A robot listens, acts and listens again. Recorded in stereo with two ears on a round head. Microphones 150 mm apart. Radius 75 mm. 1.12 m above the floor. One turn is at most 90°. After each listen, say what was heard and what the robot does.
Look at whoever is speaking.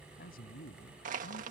The man speaking: about 60° left or 120° left. Turn 60° left.
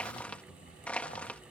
Keep listening.
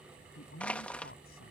So it is at 60° left. Turn 60° left.
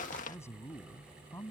The man speaking is now 15° left. Turn 15° left.
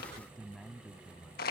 Facing the man speaking.